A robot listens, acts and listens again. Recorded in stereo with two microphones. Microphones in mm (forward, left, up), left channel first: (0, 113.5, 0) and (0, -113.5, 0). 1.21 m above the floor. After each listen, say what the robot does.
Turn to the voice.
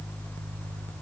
Keep listening.
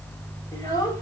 Turn 15° left.
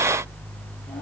Keep listening.
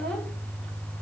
Keep listening.
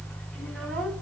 I heard a child speaking, but can't make it out now. It was about straight ahead or 150° left.